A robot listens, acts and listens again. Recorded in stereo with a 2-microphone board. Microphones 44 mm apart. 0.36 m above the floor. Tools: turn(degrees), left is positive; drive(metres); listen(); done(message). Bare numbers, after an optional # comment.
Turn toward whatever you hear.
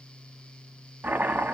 # The chopping: about 40° right or 140° right.
turn(-40)
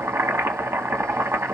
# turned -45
# So it is at 95° right.
turn(-95)
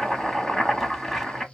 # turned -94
done("Found it: chopping, straight ahead, under 1 m away.")